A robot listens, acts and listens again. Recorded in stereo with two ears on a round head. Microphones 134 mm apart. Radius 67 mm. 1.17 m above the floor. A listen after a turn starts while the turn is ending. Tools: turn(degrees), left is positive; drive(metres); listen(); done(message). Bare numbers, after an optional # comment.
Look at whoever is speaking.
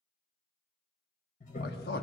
# The man speaking: about 70° left or 110° left.
turn(70)
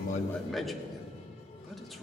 done("Found it: a man speaking, straight ahead, 1 to 2 m away.")